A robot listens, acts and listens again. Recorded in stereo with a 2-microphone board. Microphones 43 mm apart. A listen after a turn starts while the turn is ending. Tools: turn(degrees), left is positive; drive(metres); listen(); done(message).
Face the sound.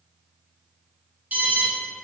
turn(degrees=-50)
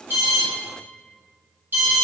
turn(degrees=-70)
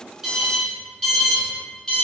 turn(degrees=20)
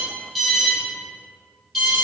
done("Found it: an alarm, straight ahead, 1 to 2 m away.")